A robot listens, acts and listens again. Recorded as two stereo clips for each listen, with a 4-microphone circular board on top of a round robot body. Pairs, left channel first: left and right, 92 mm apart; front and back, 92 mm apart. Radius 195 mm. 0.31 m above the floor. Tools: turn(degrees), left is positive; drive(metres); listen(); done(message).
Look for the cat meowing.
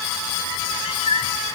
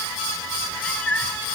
turn(degrees=75)
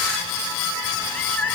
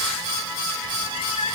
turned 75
turn(degrees=15)
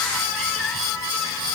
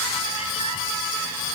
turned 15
listen()
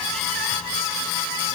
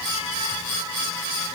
listen()
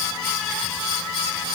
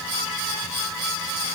done("Facing where the cat meowing came from. I can't hear it now.")